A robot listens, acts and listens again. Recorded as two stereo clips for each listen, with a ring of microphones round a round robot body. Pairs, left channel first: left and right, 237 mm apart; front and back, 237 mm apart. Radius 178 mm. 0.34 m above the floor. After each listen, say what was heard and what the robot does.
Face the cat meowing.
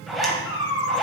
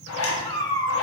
The cat meowing: 75° left. Turn 75° left.
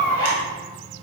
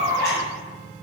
Found it: a cat meowing, straight ahead, 2 to 4 m away.